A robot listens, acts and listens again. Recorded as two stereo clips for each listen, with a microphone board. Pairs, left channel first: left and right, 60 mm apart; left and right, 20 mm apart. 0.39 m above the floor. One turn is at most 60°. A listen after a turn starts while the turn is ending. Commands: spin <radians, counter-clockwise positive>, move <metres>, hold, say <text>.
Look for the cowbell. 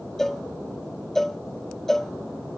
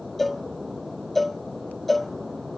spin 0.52
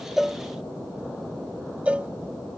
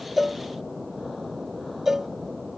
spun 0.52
spin -0.44
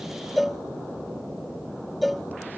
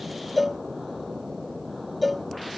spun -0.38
say Found it: a cowbell, straight ahead.